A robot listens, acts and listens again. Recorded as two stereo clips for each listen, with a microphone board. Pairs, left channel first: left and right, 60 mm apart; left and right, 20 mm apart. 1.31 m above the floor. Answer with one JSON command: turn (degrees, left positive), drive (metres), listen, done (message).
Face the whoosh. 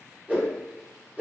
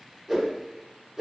{"turn": -30}
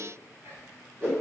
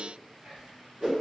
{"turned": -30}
{"turn": -120}
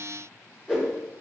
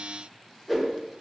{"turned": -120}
{"turn": -20}
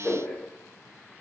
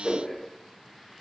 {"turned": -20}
{"done": "Facing the whoosh."}